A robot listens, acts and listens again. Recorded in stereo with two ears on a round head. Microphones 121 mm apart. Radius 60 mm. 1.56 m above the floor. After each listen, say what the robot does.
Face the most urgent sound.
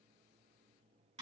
Keep listening.
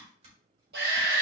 Turn 90° right.
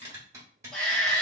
Facing the shout.